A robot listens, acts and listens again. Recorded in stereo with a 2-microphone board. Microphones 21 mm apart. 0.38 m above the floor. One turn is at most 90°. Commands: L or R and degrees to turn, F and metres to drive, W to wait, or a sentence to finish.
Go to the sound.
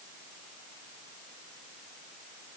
W
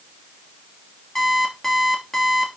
L20
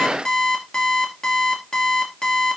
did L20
L90
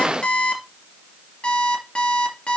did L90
L45
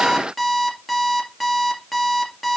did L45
F1.0
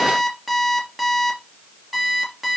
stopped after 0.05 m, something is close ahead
R10
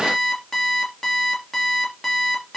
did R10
Something is in my way. I am facing the alarm clock but have not reached it.